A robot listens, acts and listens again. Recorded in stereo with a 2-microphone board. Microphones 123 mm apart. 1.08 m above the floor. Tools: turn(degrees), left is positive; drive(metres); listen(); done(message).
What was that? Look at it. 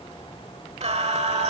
turn(degrees=-60)
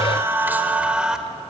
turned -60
done("Facing the singing, 1 to 2 m away.")